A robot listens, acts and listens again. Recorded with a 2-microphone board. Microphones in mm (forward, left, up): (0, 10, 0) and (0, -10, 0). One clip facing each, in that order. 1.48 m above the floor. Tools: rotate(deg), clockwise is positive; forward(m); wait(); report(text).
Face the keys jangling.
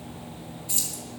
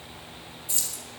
rotate(-30)
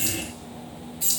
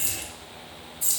rotate(-105)
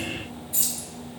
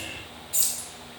rotate(40)
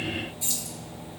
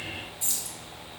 report("Facing the keys jangling, 2 to 4 m away.")